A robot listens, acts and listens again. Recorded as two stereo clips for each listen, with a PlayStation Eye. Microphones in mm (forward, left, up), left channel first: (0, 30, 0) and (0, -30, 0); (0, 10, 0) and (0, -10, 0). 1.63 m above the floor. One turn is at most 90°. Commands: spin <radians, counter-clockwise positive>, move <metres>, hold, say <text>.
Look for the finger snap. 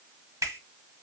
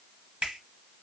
spin -1.13
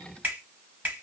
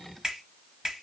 spin -0.61
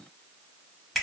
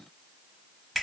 say Found it: a finger snap, straight ahead.